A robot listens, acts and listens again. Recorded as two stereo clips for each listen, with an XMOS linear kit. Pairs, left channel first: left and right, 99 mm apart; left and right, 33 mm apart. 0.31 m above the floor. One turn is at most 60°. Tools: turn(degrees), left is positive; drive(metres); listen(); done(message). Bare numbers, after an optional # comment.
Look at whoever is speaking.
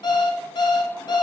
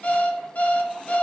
listen()
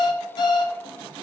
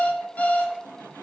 listen()
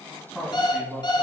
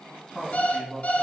turn(30)
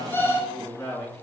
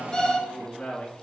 # So it is at 145° left.
turn(60)
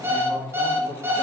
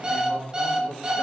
# The man speaking is now 100° left.
turn(60)
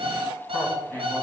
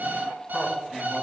# The man speaking is now 15° left.
turn(15)
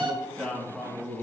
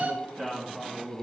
done("Found it: a man speaking, straight ahead, 2 to 4 m away.")